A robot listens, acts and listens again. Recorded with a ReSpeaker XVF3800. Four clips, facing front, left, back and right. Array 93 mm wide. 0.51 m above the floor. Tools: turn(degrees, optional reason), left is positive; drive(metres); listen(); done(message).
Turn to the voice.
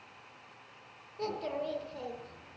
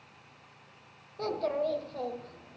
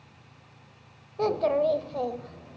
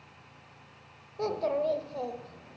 turn(degrees=-170, reason="The child speaking: 170° right.")
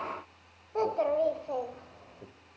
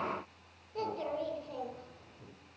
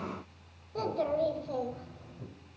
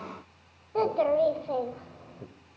turn(degrees=-65, reason="The child speaking is now 65° right.")
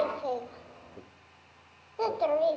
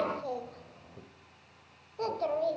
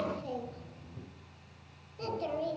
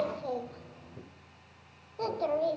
done("Facing the child speaking.")